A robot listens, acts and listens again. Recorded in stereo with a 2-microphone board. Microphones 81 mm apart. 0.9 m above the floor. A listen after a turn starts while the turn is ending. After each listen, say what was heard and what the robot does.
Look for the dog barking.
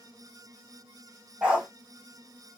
Turn 30° right.
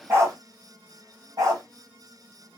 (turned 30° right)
So it is at 135° right. Turn 135° right.
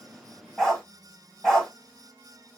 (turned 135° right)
Found it: a dog barking, straight ahead.